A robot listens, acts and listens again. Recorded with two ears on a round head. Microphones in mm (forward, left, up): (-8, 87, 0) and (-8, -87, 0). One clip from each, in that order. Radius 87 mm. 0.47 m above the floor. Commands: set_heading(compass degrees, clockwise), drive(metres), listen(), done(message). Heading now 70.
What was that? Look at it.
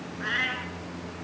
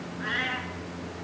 set_heading(50)
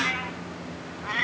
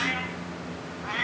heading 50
set_heading(30)
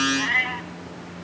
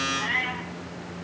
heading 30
set_heading(355)
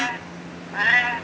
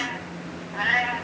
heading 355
set_heading(320)
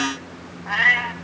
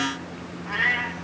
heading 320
set_heading(185)
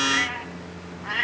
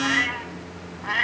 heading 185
set_heading(195)
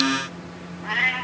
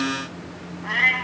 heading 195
done("Facing the cat meowing, 1 to 2 m away.")